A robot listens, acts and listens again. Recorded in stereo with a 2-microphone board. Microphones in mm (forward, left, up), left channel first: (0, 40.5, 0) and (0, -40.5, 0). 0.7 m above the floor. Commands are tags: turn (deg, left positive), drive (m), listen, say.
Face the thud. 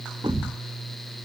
<turn deg="-90"/>
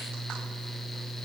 <say>I heard a thud from this way, but can't make it out now.</say>